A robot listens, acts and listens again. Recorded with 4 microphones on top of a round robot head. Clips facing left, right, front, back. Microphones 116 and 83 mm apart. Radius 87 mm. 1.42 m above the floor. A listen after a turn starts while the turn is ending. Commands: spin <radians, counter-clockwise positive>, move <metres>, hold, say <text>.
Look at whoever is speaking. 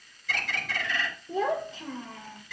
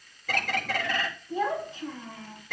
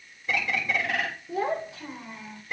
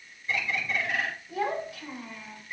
spin 1.13
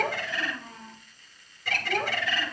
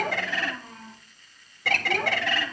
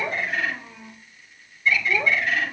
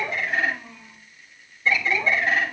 say Found it: a child speaking, straight ahead.